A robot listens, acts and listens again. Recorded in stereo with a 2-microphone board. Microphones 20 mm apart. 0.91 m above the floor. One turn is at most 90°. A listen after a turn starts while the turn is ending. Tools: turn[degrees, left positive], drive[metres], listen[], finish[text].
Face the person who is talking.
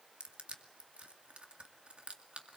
Action: listen[]
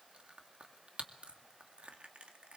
Action: listen[]
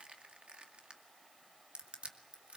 Action: finish[I can't make out anyone speaking to turn to.]